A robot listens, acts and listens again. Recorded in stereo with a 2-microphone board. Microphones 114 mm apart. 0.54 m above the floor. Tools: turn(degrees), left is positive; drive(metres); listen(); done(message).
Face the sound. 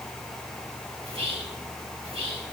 turn(degrees=-55)
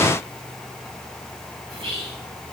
turn(degrees=-60)
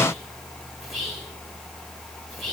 done("Found it: whispering, straight ahead, 2 to 4 m away.")